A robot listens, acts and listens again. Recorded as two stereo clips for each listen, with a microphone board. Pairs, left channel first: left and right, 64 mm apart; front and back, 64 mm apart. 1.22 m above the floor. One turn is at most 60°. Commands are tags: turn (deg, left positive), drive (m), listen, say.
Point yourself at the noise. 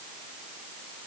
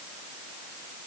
<listen/>
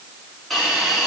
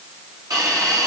<turn deg="60"/>
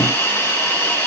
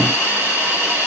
<turn deg="60"/>
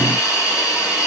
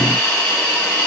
<turn deg="60"/>
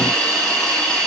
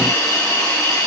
<turn deg="10"/>
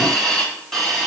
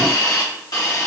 <say>Found it: a hiss, straight ahead.</say>